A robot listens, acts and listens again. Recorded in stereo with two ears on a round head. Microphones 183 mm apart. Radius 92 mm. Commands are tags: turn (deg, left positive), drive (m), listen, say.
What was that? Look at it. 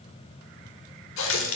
<turn deg="65"/>
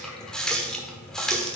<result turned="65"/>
<say>Facing the running tap, 1 to 2 m away.</say>